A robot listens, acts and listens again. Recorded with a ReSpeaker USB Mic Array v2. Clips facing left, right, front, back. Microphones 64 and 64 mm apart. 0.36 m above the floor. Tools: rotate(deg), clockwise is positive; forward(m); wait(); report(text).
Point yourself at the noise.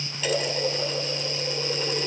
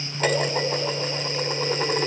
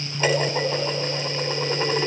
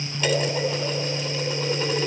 rotate(50)
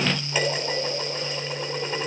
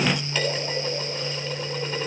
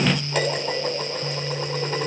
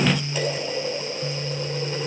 rotate(-20)
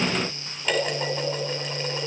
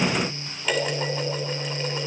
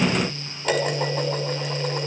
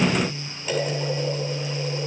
report("Facing the dishes clattering.")